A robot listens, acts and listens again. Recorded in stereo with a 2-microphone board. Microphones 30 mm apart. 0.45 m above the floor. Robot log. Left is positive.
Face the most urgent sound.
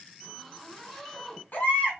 note: The baby crying: about 65° left or 115° left.
cmd yaw +65
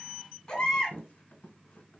note: So it is at 30° left.
cmd yaw +30
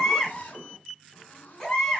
note: The baby crying is now 15° left.
cmd yaw +15
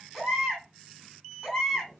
end: Found it: a baby crying, straight ahead, 1 to 2 m away.